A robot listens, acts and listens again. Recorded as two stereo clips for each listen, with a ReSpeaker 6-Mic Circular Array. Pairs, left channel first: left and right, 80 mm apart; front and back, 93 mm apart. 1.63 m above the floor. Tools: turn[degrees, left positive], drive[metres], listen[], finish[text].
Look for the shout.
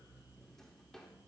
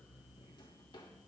Action: listen[]
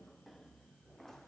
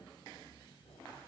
Action: listen[]
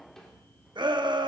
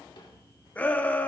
Thought: The shout: 75° right.
Action: turn[-75]
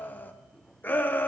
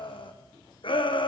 Thought: The shout is now 25° left.
Action: turn[25]
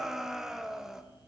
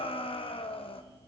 Action: finish[Facing the shout.]